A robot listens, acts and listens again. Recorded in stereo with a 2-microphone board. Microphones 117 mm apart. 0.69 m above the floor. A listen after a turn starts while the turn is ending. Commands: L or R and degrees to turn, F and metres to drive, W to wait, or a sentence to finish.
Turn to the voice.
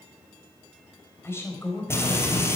L20
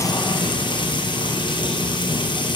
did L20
W
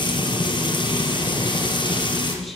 W
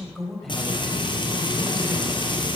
Found it: a woman speaking, straight ahead, over 4 m away.